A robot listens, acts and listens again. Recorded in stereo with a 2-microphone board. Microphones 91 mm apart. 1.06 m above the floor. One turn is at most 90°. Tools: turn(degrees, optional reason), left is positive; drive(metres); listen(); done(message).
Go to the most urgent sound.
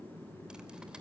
listen()
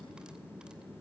listen()
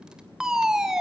turn(degrees=-30)
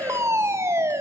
turn(degrees=-90, reason="So it is at 145° right.")
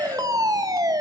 turn(degrees=-55, reason="The fire alarm is now 55° right.")
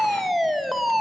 drive(metres=1.0)
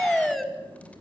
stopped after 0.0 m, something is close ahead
done("Something is in my way. I am facing the fire alarm but have not reached it.")